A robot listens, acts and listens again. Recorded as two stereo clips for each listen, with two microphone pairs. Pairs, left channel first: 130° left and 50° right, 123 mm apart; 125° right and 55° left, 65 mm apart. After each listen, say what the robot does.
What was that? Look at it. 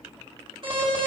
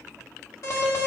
Turn 95° right.
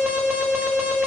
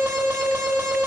Turn 25° left.
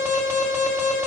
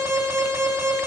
Turn 20° left.
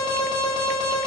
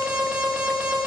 Found it: an alarm, straight ahead, 2 to 4 m away.